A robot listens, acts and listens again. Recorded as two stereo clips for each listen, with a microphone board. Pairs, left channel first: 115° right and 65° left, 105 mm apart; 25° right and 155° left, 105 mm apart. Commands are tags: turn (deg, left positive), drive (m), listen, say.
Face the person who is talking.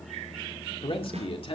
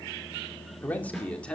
<turn deg="-100"/>
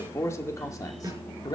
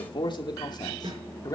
<turn deg="-70"/>
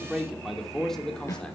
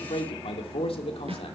<turn deg="-30"/>
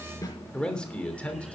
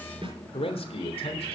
<turn deg="-35"/>
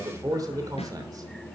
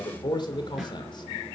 <turn deg="15"/>
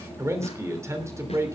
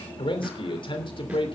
<turn deg="10"/>
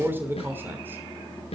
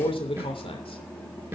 <say>Found it: a man speaking, straight ahead, 2 to 4 m away.</say>